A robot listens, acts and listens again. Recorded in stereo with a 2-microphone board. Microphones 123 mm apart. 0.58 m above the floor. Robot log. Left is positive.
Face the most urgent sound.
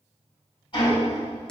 cmd idle
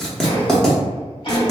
cmd idle
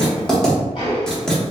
end: I can't make out anything urgent, only ticking and writing.